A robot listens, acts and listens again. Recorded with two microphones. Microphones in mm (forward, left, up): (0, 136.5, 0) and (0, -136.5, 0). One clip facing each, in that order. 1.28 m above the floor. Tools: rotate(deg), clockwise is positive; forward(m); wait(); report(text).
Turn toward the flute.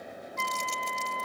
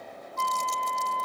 rotate(55)
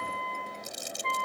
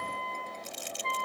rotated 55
report("Facing the flute.")